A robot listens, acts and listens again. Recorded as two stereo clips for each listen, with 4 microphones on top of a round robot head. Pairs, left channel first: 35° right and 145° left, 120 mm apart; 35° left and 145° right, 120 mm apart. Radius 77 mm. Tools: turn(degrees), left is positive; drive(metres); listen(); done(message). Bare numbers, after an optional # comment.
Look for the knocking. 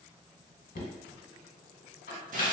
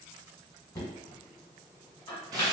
# The knocking: 30° right.
turn(-30)
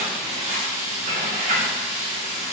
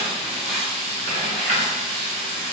listen()
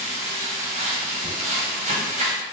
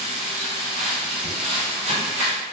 listen()
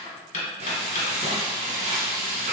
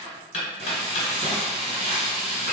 # The knocking is now 10° right.
turn(-10)
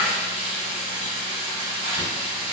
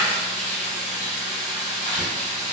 listen()
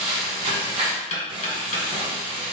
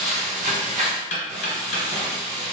done("Found it: knocking, straight ahead.")